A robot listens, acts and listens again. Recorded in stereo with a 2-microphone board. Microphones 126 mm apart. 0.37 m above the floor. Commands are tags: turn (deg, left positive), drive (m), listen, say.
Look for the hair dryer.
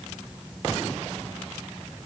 <listen/>
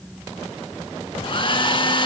<turn deg="40"/>
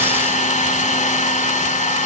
<turn deg="105"/>
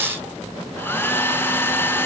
<turn deg="15"/>
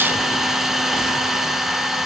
<say>Found it: a hair dryer, straight ahead.</say>